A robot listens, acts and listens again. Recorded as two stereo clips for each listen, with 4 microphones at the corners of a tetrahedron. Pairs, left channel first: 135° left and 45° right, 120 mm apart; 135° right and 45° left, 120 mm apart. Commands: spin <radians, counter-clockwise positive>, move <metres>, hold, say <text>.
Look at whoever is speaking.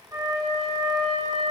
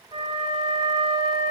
hold
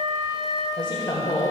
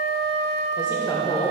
spin 3.05
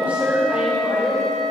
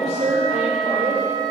spin 0.52
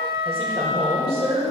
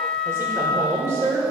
spin -0.35
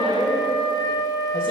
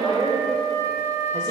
spin -0.17
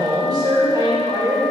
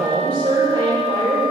say Found it: a woman speaking, straight ahead.